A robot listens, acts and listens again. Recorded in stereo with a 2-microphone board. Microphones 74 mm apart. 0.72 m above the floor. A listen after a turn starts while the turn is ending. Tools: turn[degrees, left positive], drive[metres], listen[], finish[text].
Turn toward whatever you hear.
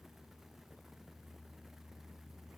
Action: listen[]
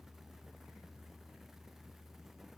Action: listen[]
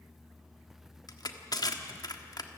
Thought: The crushing: about 60° left or 120° left.
Action: turn[60]
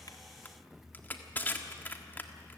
Thought: So it is at 30° left.
Action: turn[30]
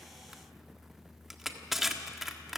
Action: finish[Found it: crushing, straight ahead, 1 to 2 m away.]